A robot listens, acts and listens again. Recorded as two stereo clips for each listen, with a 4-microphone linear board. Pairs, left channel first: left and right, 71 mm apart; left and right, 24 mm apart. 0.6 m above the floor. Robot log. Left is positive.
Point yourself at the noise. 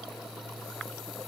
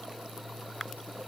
cmd idle
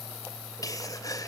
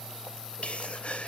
note: The sneeze: about 60° left or 120° left.
cmd yaw +60
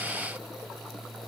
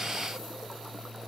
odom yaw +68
cmd idle
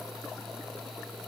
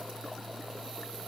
end: I heard a sneeze, but can't make it out now. It was about 10° right or 55° left.